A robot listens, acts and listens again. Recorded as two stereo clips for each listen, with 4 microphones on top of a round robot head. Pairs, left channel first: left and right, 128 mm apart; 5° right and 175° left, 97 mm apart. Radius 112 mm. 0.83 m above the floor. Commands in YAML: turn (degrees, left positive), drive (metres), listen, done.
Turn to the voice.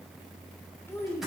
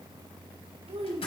turn: 165
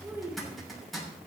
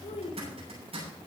turn: -15
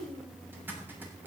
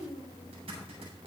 done: "Found it: a child speaking, straight ahead."